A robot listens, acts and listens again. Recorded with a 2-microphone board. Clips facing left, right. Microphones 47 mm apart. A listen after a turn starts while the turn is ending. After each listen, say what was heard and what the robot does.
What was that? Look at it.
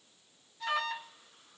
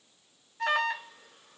The alarm: about 55° right or 125° right. Turn 55° right.
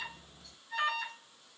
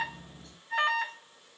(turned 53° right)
So it is at 60° right. Turn 60° right.
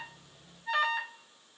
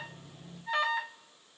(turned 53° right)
Found it: an alarm, straight ahead.